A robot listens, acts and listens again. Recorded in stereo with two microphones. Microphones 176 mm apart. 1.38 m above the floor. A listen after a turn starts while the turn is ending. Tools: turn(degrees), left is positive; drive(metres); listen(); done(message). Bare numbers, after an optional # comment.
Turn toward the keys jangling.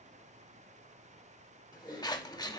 listen()
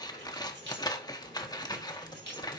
turn(-90)
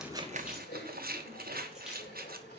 listen()
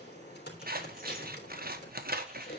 listen()
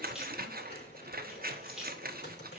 done("Facing the keys jangling.")